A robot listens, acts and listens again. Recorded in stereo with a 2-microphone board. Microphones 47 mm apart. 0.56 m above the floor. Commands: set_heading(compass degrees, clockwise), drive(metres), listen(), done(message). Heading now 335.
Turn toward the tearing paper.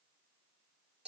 listen()
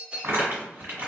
set_heading(25)
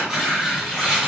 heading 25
set_heading(35)
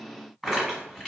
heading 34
done("Found it: tearing paper, straight ahead, 1 to 2 m away.")